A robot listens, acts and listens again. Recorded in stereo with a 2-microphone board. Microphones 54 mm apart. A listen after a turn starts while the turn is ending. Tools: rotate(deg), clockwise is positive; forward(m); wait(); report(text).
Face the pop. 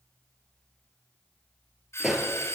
rotate(30)
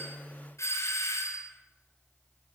wait()
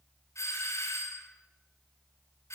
report("I heard a pop, but can't make it out now. It was about 20° left or 140° right.")